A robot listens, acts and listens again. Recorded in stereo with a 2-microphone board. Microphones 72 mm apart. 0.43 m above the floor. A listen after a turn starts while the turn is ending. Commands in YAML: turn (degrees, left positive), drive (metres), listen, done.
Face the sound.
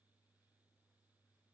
listen: true
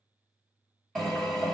turn: 30
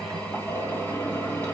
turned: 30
turn: 145
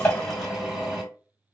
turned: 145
done: "Facing the drill, 1 to 2 m away."